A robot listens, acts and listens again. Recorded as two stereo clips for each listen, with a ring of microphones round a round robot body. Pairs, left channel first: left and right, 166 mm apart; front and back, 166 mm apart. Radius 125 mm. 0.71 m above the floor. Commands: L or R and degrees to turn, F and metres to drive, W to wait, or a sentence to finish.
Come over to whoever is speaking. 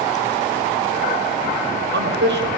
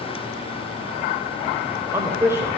R100
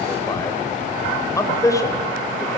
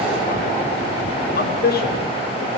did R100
L20
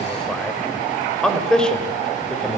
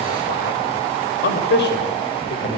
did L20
F1.0
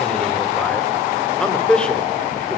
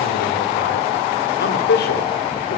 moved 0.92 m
F1.0
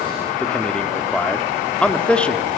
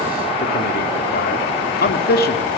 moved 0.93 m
F1.0
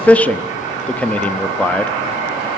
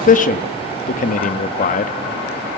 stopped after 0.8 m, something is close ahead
L10
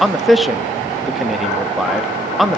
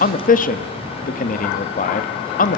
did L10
I am next to the man speaking.